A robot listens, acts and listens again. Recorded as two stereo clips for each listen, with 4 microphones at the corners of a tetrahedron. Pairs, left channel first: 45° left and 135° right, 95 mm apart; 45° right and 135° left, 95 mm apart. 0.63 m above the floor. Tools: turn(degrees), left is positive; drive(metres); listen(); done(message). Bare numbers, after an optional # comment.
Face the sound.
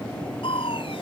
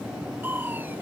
# The crushing: 65° left.
turn(65)
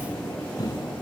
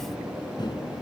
done("Facing the crushing.")